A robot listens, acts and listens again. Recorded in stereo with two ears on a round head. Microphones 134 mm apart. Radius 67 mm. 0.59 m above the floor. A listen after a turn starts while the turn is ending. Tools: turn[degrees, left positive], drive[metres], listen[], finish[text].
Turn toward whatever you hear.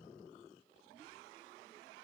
Action: listen[]
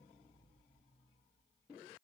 Action: listen[]
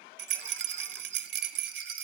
Action: turn[-90]
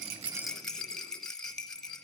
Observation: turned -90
Action: finish[Facing the rattle, under 1 m away.]